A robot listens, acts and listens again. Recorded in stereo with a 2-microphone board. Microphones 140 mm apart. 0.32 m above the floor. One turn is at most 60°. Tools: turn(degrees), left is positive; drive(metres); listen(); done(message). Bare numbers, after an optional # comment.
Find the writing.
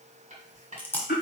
# The writing: about 55° right or 125° right.
turn(-55)
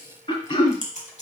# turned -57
listen()
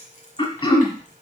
# So it is at 10° right.
turn(-10)
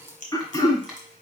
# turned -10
done("Facing the writing.")